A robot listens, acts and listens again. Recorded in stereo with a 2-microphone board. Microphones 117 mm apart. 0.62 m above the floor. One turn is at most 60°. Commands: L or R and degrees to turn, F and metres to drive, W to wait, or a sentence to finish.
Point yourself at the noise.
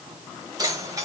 R30
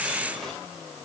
W
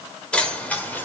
L15
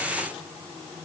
W
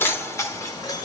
L35
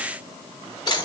L40
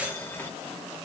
L15
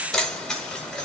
Found it: keys jangling, straight ahead.